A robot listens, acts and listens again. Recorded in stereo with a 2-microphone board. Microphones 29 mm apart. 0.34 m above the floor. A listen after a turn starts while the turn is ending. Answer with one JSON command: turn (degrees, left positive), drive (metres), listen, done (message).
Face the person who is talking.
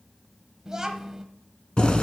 {"turn": -25}
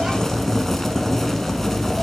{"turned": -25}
{"listen": true}
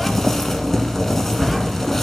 {"listen": true}
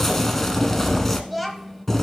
{"done": "Found it: a child speaking, straight ahead, 1 to 2 m away."}